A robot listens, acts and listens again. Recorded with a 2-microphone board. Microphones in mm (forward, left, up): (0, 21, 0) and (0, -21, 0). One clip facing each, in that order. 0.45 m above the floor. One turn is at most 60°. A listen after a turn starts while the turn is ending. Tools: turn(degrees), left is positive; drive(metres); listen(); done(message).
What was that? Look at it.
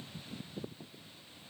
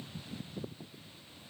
listen()
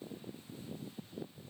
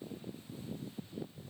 listen()
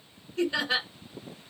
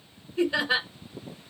turn(degrees=-30)
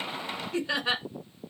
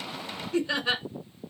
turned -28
turn(degrees=15)
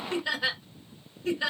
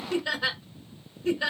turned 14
done("Found it: laughter, straight ahead, 1 to 2 m away.")